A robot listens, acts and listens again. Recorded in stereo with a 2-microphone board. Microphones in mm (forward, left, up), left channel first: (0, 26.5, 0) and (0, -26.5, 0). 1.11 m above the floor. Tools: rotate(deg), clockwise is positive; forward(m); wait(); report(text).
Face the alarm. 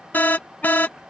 rotate(-35)
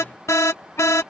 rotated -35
rotate(-105)
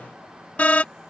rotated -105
rotate(-30)
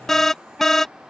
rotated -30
rotate(-10)
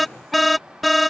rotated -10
report("Found it: an alarm, straight ahead.")